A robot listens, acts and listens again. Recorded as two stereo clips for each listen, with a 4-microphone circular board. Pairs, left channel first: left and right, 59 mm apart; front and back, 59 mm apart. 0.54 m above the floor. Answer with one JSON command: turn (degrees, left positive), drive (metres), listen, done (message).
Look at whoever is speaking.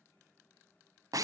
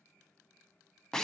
{"listen": true}
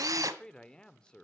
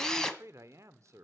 {"turn": 160}
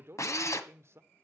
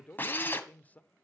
{"turn": -60}
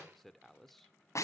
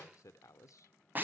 {"done": "Facing the man speaking."}